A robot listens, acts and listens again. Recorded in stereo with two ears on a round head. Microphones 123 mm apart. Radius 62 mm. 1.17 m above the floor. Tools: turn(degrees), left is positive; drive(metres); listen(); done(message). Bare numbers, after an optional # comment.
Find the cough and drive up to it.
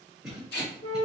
turn(30)
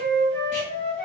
listen()
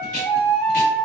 listen()
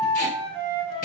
done("I heard a cough, but can't make it out now. It was about 30° right or 150° left. I did not reach it.")